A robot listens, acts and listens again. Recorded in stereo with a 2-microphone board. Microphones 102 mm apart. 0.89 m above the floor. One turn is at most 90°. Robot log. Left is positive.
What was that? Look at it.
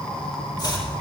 note: The chopping: about 40° left or 140° left.
cmd yaw +40
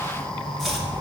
end: Facing the chopping, 2 to 4 m away.